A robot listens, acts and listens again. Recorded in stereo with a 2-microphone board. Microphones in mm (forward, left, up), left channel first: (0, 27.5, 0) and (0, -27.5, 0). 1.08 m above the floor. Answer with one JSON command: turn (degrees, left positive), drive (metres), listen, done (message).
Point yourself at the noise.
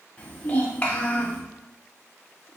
{"turn": 25}
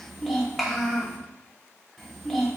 {"done": "Facing the child speaking."}